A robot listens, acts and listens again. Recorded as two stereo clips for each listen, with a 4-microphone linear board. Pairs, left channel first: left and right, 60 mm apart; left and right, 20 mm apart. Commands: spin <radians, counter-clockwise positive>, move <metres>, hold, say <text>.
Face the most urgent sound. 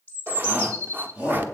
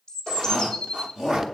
spin -0.44
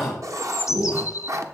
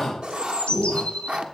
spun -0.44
say Found it: a shout, straight ahead.